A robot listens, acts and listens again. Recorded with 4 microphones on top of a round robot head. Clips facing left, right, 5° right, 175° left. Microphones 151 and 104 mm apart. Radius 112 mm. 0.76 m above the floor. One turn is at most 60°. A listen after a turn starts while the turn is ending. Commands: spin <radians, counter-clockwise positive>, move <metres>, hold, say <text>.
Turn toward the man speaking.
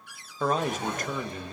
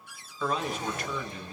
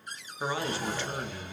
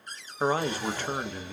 spin 1.05
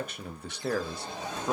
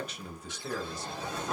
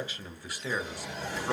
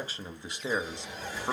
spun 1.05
spin 1.05
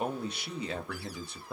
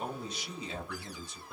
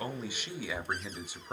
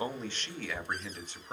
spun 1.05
spin 1.05
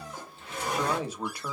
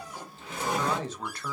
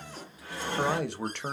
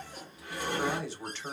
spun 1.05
spin 0.17
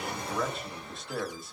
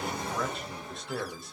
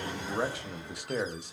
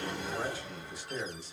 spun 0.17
say Found it: a man speaking, straight ahead, under 1 m away.